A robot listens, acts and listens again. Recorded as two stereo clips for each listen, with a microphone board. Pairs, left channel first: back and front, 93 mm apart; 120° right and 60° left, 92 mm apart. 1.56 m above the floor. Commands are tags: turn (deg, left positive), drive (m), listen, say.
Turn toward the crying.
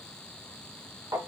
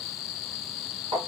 <listen/>
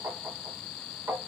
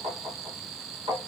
<listen/>
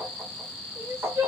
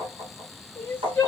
<turn deg="-50"/>
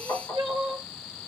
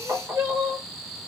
<turn deg="10"/>
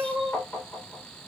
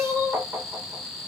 <say>Found it: crying, straight ahead, 1 to 2 m away.</say>